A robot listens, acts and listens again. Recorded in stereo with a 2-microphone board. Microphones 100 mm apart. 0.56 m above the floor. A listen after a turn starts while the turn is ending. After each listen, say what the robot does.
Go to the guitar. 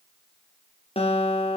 Turn 90° left.
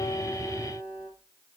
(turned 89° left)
Turn 10° right.
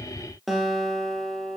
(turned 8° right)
Drive 1.0 m forward.
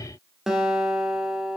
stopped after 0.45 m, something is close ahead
Something is in my way. I am facing the guitar but have not reached it.